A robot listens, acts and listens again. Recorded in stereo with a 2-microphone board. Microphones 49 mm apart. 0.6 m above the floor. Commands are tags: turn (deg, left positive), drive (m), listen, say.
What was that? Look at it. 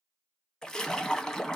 <turn deg="30"/>
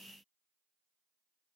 <listen/>
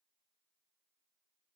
<say>I heard a splash, but can't make it out now. It was about 20° right or 140° left.</say>